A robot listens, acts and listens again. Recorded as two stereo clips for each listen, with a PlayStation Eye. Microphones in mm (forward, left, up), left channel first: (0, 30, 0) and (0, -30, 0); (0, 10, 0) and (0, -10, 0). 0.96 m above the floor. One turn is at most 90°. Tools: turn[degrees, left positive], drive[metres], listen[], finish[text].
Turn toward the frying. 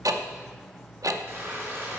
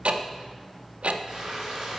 Thought: The frying: about 45° right or 135° right.
Action: turn[-45]
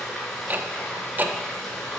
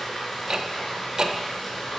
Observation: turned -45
Action: finish[Found it: frying, straight ahead.]